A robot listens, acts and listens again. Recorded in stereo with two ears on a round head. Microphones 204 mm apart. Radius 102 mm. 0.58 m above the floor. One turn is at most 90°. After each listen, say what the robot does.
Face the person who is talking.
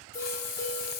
Keep listening.
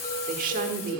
Turn 40° right.
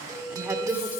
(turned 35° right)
Turn 10° right.
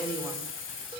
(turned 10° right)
Keep listening.
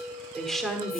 Found it: a woman speaking, straight ahead.